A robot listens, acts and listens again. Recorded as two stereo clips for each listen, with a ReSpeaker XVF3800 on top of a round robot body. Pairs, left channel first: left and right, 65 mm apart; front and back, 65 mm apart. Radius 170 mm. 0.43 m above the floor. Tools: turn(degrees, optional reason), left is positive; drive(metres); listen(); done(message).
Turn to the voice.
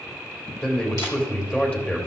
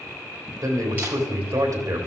turn(degrees=155, reason="The man speaking: 155° left.")
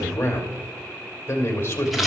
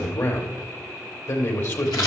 turn(degrees=40, reason="The man speaking is now 40° left.")
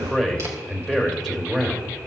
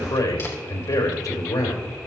done("Facing the man speaking.")